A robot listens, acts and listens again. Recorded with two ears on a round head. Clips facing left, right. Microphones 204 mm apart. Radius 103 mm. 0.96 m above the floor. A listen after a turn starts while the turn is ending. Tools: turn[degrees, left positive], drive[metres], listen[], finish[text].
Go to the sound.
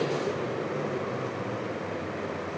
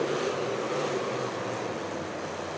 Action: listen[]
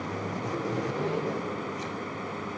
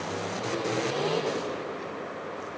Action: listen[]
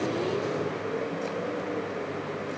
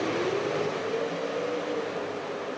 Action: finish[I can't make out anything.]